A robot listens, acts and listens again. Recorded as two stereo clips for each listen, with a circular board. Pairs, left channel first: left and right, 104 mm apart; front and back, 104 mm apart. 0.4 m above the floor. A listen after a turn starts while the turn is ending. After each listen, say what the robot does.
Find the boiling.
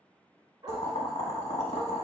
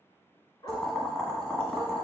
Turn 85° left.
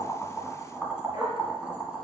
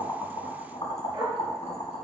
Turn 10° right.
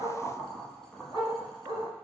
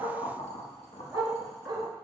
Facing the boiling.